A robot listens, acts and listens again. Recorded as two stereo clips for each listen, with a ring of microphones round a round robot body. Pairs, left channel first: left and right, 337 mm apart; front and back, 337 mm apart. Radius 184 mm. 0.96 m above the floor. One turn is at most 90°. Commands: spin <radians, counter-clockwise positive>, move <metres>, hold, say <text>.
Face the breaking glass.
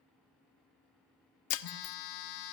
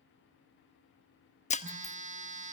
spin 1.22
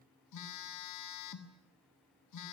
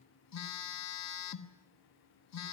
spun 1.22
say I heard breaking glass from this way, but can't make it out now.